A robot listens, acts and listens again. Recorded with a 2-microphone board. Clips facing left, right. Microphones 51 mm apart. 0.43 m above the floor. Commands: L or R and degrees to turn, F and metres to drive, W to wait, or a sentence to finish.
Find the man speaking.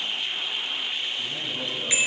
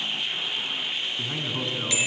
R45
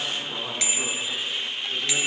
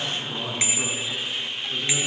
Facing the man speaking.